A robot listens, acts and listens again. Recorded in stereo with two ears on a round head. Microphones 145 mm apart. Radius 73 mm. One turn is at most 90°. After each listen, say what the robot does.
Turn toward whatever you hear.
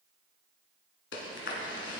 Turn 90° left.
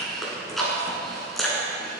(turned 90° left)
Found it: chewing, straight ahead, 1 to 2 m away.